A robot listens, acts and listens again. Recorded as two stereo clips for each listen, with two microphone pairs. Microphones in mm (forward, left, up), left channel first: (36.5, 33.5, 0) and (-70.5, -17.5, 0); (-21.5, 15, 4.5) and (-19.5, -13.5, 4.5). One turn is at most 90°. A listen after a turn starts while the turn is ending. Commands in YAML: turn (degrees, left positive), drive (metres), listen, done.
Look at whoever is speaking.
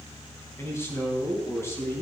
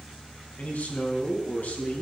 turn: 90
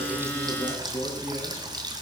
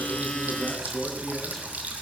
turn: 10
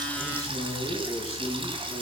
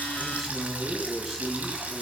done: "Found it: a man speaking, straight ahead, over 4 m away."